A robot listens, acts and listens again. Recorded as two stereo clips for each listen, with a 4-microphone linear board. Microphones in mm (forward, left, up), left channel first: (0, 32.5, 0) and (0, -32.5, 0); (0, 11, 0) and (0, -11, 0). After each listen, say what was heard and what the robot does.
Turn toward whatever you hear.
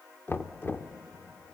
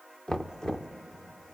The knocking: about 35° left or 145° left. Turn 35° left.
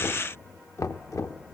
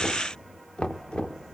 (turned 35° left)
So it is at 100° left. Turn 100° left.
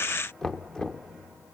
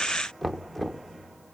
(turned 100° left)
The knocking is now 10° left. Turn 10° left.
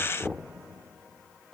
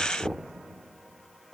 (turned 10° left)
Found it: knocking, straight ahead.